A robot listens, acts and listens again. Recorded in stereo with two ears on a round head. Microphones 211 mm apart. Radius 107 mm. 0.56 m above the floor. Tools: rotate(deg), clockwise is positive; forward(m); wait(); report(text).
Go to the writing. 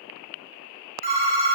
wait()
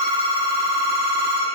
wait()
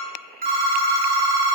report("I can't make out writing, only a phone ringing.")